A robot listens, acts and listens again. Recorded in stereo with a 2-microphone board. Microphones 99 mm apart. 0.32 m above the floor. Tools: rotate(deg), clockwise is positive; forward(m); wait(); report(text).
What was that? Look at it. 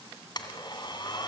rotate(-45)
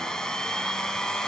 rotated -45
report("Found it: a blender, straight ahead, 2 to 4 m away.")